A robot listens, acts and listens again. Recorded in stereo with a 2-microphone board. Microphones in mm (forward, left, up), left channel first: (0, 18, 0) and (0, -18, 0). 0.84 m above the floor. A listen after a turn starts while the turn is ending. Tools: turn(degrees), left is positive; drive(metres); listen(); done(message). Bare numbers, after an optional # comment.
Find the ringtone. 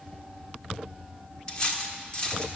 listen()
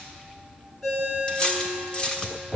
turn(30)
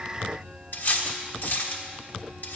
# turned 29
listen()
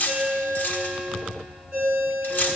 # So it is at 30° right.
turn(-30)
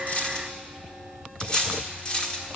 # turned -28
listen()
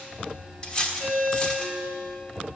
done("Facing the ringtone.")